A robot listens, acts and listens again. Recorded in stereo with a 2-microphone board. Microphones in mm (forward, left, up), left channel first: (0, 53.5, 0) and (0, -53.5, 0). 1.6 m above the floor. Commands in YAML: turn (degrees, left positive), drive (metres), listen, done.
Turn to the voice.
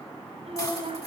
turn: -90
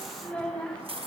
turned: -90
turn: 10
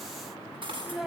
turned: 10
done: "Facing the child speaking."